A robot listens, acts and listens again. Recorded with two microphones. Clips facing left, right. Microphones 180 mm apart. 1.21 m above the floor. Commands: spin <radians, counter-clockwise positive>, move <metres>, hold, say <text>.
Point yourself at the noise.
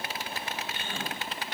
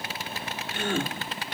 spin -1.57
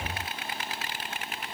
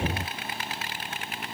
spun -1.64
say I heard a gasp from this way, but can't make it out now.